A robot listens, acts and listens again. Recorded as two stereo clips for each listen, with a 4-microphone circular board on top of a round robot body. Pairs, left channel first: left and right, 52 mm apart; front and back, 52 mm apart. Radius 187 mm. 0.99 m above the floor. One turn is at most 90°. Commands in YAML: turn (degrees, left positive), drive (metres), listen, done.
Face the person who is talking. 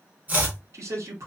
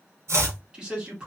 turn: -90
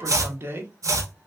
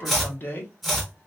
turn: -45
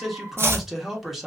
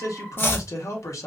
done: "Found it: a man speaking, straight ahead, 1 to 2 m away."